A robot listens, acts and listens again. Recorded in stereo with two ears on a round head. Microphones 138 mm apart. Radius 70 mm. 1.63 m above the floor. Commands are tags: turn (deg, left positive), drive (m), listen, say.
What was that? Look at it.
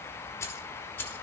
<turn deg="15"/>
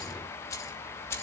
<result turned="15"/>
<turn deg="20"/>
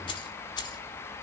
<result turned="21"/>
<turn deg="30"/>
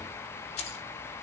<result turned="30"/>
<turn deg="130"/>
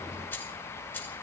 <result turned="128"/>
<turn deg="15"/>
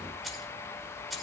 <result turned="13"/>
<say>Facing the keys jangling.</say>